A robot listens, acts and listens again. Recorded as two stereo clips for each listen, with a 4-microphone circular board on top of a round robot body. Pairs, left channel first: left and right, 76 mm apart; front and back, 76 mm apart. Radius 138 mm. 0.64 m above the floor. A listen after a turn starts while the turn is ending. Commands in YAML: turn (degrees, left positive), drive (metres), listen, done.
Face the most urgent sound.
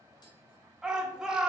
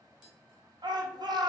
turn: -170
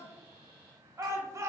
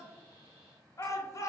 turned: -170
turn: -45
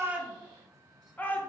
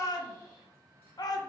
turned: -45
turn: 20
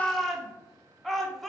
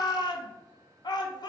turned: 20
done: "Found it: a shout, straight ahead."